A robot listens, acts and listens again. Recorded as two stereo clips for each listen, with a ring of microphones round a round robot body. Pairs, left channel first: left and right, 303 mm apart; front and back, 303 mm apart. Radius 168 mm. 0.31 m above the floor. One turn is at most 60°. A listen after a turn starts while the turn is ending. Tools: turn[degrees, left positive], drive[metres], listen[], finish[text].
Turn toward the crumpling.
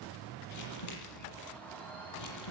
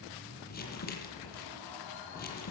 Thought: The crumpling: 60° left.
Action: turn[60]
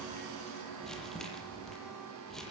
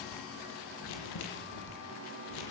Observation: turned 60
Action: finish[Facing the crumpling, over 4 m away.]